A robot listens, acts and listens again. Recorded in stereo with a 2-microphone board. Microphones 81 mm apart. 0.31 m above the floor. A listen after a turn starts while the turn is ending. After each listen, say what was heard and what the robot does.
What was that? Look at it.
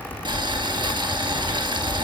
Turn 90° right.
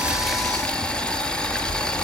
So it is at 10° left. Turn 10° left.
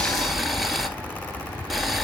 Found it: boiling, straight ahead, 1 to 2 m away.